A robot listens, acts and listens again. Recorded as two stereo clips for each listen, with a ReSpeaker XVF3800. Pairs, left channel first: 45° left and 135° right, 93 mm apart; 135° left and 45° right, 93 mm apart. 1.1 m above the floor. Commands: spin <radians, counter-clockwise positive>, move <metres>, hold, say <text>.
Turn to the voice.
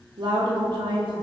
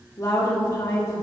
spin -2.97
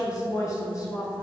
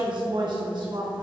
spin -0.17
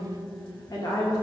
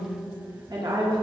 say Facing the woman speaking.